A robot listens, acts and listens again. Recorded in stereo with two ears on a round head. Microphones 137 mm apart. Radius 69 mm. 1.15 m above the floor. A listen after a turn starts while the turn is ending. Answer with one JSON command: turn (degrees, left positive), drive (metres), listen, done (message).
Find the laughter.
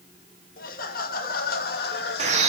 {"turn": 90}
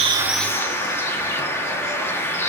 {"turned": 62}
{"turn": 30}
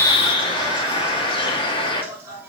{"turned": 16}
{"turn": -15}
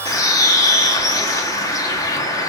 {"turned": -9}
{"listen": true}
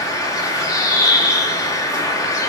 {"listen": true}
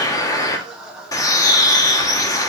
{"done": "Found it: laughter, straight ahead, 2 to 4 m away."}